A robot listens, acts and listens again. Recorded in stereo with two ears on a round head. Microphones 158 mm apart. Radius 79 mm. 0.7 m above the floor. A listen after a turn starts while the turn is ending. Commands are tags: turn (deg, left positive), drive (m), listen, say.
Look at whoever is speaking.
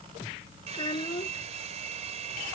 <turn deg="30"/>
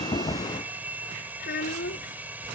<turn deg="120"/>
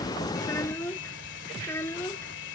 <turn deg="15"/>
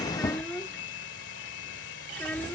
<say>Facing the child speaking.</say>